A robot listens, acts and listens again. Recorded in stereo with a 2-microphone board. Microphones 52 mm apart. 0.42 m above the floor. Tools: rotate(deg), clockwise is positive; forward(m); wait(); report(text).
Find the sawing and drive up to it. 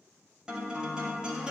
wait()
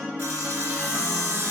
rotate(70)
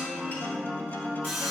forward(1.0)
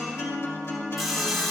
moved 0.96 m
forward(1.0)
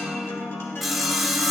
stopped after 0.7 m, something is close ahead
report("Arrived at the sawing, straight ahead.")